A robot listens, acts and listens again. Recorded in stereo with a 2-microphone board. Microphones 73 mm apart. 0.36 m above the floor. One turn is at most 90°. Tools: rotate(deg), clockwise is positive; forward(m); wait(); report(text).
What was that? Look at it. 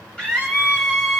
rotate(-30)
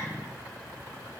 wait()
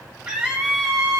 rotate(15)
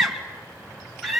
report("Facing the scream, 2 to 4 m away.")